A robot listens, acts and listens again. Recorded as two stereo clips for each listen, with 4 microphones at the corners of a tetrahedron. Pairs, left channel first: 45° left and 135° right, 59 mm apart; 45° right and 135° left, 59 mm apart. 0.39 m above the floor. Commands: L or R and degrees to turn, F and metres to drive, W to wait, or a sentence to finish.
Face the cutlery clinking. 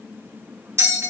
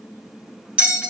W
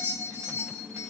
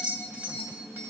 W
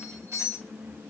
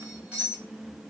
I can't make out cutlery clinking, only a bell.